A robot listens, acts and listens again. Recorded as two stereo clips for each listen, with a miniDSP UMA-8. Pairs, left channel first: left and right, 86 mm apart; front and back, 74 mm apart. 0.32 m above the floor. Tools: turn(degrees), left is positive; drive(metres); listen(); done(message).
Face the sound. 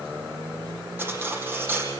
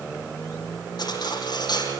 turn(degrees=-25)
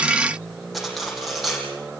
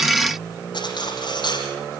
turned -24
done("Found it: cutlery clinking, straight ahead, over 4 m away.")